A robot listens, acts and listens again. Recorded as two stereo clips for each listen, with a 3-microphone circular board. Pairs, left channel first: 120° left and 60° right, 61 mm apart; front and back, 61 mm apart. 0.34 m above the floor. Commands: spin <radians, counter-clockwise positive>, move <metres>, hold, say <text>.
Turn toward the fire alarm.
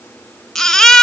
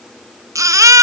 hold
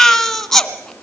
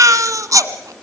hold
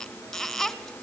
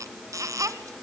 say I can't make out a fire alarm, only a baby crying.